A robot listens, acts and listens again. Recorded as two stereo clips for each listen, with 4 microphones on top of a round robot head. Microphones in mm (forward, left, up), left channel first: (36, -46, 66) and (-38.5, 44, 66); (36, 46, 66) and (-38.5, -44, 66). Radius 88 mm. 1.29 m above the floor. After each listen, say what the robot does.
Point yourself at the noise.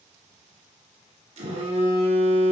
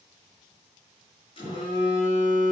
Turn 95° left.
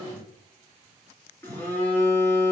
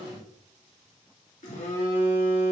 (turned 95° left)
Turn 25° left.
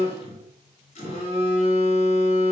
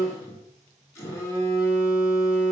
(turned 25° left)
Turn 15° right.
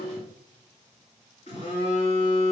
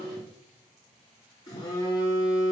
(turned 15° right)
Turn 10° right.
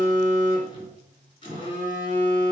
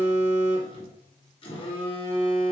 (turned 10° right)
Found it: a phone buzzing, straight ahead.